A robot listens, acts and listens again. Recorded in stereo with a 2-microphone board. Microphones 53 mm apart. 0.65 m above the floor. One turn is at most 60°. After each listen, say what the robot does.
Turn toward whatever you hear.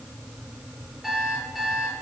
Turn 30° right.
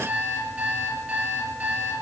Turn 60° right.
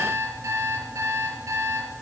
Turn 60° right.
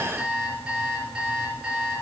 Turn 15° right.
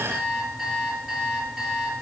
Facing the alarm clock, over 4 m away.